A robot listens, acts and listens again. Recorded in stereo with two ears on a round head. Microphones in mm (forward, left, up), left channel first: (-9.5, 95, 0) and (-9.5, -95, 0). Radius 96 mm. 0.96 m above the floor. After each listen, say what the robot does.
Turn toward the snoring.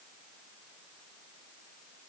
Keep listening.
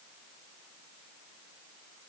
Keep listening.
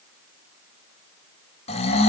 Turn 30° left.
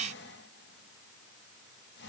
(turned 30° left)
Keep listening.
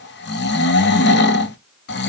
Turn 120° left.
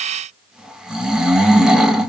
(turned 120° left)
Found it: snoring, straight ahead.